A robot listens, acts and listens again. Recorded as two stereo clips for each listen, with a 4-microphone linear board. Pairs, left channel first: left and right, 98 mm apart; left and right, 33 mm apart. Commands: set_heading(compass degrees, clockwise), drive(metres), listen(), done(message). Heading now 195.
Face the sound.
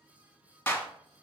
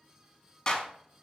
set_heading(175)
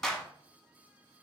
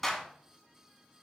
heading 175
done("Facing the clap.")